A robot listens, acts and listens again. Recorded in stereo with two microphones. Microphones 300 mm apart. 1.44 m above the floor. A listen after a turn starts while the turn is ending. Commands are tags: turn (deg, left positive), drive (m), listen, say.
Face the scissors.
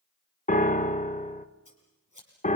<turn deg="90"/>
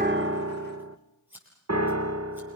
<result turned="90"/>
<say>Found it: scissors, straight ahead, over 4 m away.</say>